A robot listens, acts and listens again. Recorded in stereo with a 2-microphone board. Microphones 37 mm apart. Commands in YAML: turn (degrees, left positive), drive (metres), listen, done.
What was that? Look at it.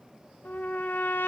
turn: 55
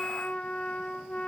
turn: 40
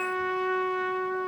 done: "Facing the trumpet."